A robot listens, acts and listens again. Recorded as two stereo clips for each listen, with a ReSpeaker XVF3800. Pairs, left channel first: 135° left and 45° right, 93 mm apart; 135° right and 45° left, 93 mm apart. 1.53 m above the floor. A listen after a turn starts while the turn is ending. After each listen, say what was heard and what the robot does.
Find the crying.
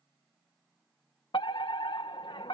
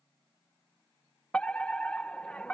Keep listening.
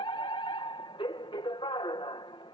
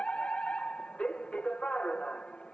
Keep listening.
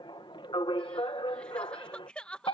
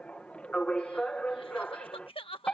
The crying: 145° right. Turn 145° right.
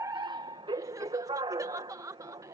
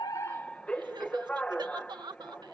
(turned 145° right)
The crying is now 10° left. Turn 10° left.
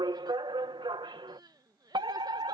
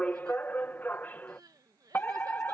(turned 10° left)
Found it: crying, straight ahead.